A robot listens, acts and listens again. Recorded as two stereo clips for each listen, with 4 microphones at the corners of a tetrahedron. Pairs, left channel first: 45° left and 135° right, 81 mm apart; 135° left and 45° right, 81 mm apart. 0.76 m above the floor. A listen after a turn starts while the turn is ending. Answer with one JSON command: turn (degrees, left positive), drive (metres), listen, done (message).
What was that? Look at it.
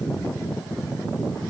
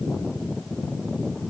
{"listen": true}
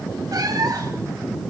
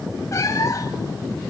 {"turn": -175}
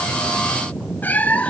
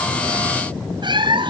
{"turn": -30}
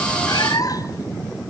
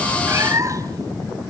{"done": "Facing the cat meowing, 1 to 2 m away."}